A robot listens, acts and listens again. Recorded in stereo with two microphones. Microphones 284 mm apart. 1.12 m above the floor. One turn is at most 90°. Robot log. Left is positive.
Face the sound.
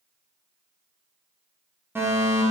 cmd yaw -30
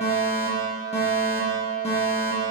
note: So it is at 25° left.
cmd yaw +25
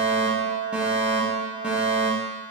end: Facing the fire alarm.